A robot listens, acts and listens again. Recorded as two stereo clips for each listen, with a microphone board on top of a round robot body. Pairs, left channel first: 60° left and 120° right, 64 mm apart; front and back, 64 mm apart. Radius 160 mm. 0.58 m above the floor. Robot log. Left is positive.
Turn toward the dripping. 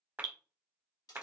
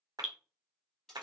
note: The dripping: 95° right.
cmd yaw -95
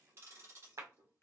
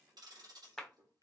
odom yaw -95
note: The dripping is now 10° left.
cmd yaw +10
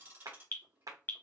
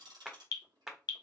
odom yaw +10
end: Found it: dripping, straight ahead.